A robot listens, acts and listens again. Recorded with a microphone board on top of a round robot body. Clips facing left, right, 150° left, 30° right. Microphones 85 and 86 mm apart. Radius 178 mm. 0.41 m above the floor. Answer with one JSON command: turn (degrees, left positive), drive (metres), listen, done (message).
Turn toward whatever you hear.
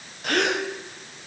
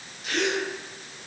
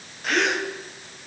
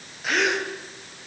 {"turn": 60}
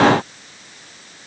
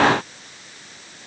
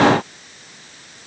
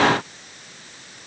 {"done": "Facing where the gasp came from. I can't hear it now."}